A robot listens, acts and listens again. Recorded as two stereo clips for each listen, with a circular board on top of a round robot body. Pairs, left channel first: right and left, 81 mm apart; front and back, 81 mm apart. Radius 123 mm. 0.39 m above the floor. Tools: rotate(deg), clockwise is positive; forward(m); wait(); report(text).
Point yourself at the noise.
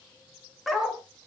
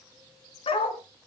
report("Facing the dog barking, 2 to 4 m away.")